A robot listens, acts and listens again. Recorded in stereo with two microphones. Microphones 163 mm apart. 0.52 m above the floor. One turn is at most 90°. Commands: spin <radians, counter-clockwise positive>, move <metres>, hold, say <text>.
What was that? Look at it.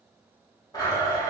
spin 0.44
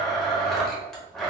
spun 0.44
say Found it: a blender, straight ahead, 1 to 2 m away.